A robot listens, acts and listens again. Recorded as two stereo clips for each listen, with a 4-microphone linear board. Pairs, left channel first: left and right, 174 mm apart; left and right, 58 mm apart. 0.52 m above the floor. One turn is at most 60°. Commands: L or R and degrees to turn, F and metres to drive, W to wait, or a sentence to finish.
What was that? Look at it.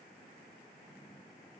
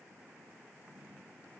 W
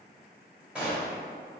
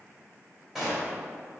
R30
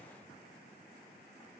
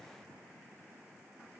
W
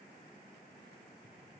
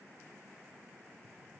I heard a gunshot, but can't make it out now. It was about 25° left or 145° right.